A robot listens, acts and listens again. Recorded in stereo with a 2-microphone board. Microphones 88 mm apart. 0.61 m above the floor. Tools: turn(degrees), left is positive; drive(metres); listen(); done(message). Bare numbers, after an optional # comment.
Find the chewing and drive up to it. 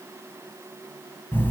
listen()
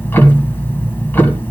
listen()
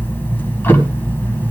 done("I can't make out chewing to turn to.")